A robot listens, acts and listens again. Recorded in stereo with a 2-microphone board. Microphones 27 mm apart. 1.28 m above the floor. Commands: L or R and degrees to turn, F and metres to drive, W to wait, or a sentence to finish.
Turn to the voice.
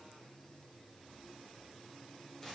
W
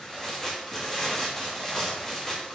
W
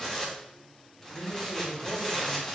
L70
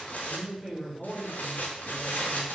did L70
Facing the man speaking, 2 to 4 m away.